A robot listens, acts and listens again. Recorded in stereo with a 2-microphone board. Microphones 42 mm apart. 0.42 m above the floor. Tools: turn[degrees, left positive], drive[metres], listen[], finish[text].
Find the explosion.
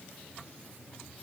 Action: listen[]
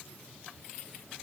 Action: listen[]
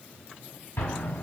Action: turn[90]
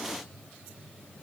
Action: finish[I heard an explosion from this way, but can't make it out now.]